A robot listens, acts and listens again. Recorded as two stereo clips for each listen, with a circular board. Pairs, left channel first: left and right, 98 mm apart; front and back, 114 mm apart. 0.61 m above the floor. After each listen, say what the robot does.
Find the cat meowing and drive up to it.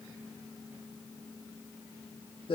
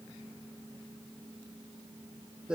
Keep listening.
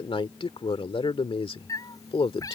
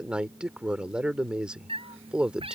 Turn 145° left.
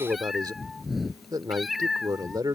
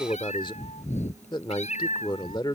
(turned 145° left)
Drive 1.0 m forward.
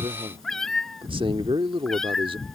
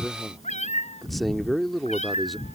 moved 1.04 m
Drive 1.0 m forward.
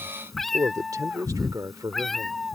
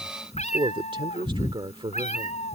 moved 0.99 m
Drive 1.0 m forward.
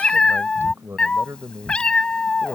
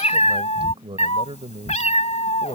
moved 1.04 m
Turn 10° left.
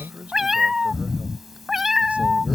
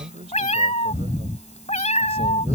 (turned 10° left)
Drive 1.0 m forward.
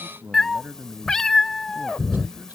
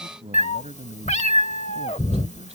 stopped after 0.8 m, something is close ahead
I am next to the cat meowing.